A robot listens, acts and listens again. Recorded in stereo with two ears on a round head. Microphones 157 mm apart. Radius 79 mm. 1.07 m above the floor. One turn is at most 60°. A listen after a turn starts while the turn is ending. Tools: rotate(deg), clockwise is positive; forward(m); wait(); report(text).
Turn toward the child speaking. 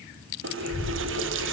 rotate(-50)
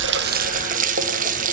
wait()
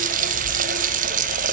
wait()
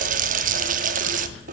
report("I heard a child speaking, but can't make it out now. It was about straight ahead or 80° left.")